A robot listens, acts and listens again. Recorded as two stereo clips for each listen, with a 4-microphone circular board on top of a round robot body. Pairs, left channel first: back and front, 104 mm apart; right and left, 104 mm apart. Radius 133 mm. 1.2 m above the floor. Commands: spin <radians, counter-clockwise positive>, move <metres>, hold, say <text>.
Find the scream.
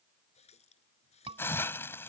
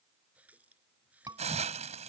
spin 0.61
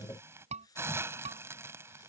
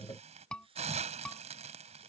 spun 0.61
spin -0.17
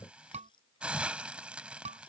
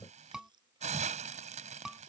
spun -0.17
say Facing the scream.